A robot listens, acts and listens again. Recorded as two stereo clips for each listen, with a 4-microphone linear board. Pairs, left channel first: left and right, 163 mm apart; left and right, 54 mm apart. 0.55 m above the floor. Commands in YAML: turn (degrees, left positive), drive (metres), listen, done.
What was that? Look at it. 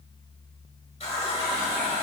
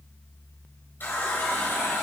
turn: 40
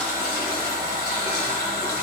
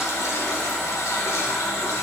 turn: 95
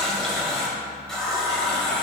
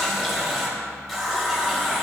done: "Found it: a running tap, straight ahead."